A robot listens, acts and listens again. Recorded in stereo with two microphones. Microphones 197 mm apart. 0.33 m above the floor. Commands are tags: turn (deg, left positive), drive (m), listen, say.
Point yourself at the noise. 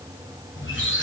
<turn deg="90"/>
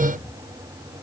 <listen/>
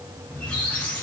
<say>Found it: a squeak, straight ahead, 2 to 4 m away.</say>